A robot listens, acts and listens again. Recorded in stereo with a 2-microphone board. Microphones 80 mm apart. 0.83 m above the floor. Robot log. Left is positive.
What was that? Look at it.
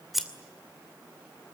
cmd yaw +30
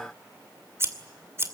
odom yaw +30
note: So it is at 30° right.
cmd yaw -30
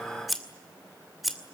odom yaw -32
end: Facing the scissors, 2 to 4 m away.